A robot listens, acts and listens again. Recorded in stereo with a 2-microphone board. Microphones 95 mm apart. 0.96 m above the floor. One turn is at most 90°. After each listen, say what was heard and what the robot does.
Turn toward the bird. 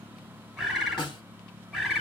Turn 30° left.
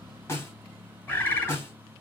So it is at 155° left. Turn 90° left.
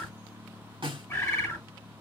The bird is now 25° left. Turn 25° left.
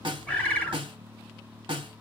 The bird is now 15° left. Turn 15° left.
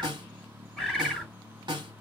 Found it: a bird, straight ahead, 1 to 2 m away.